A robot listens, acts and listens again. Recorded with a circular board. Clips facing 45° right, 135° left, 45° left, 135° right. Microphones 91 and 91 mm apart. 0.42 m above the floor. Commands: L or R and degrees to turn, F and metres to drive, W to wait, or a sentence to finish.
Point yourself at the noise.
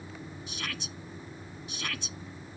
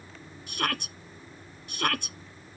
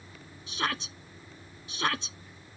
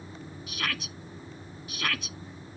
L105
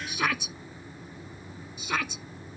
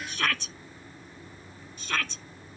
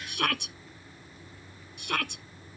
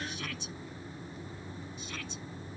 L35
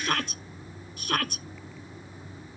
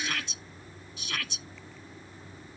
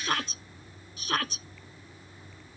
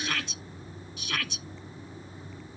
Facing the shout.